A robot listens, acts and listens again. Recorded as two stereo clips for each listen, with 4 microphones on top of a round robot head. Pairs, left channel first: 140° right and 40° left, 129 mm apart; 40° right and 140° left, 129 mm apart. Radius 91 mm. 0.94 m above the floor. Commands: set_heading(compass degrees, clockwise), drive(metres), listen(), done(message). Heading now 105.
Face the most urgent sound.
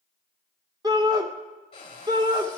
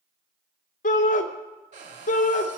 set_heading(125)
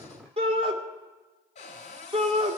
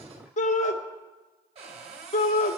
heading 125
set_heading(135)
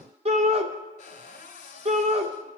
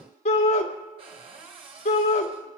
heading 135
done("Facing the shout.")